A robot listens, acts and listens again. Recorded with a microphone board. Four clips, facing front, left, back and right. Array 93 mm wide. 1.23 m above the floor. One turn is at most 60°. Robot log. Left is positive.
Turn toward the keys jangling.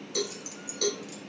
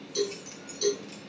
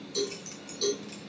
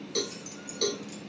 note: The keys jangling: 150° left.
cmd yaw +60
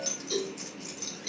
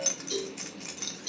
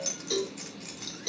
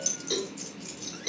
note: The keys jangling is now 110° left.
cmd yaw +60
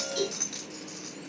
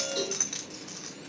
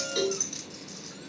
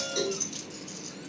note: The keys jangling is now 80° left.
cmd yaw +60
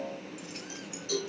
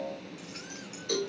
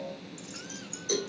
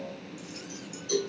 note: The keys jangling is now 40° left.
cmd yaw +40
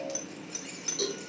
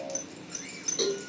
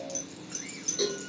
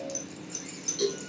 note: The keys jangling is now 25° left.
cmd yaw +25
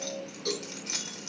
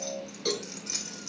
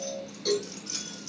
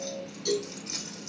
end: Found it: keys jangling, straight ahead, 2 to 4 m away.